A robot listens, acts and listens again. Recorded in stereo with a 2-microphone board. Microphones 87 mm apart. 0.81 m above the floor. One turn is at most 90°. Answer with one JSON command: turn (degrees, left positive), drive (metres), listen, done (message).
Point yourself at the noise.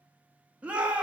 {"turn": -30}
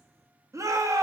{"turn": -90}
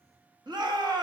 {"turn": -70}
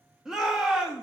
{"done": "Facing the shout, 1 to 2 m away."}